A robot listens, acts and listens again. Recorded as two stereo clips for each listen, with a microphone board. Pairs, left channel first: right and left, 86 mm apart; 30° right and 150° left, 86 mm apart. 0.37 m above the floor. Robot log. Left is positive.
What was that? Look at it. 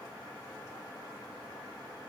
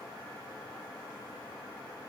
cmd idle
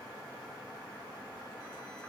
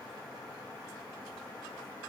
cmd idle
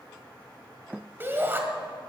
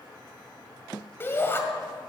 note: The shout: 30° left.
cmd yaw +30
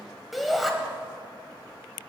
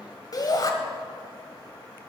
end: Facing the shout.